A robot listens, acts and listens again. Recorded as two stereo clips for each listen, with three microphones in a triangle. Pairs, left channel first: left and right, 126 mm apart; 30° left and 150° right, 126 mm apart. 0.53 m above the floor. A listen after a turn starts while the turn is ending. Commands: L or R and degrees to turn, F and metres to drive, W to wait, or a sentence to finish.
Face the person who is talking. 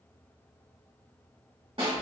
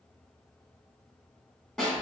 W
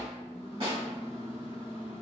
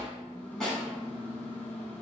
W
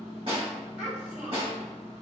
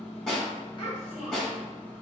R10
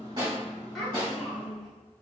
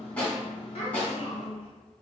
Found it: a child speaking, straight ahead, 1 to 2 m away.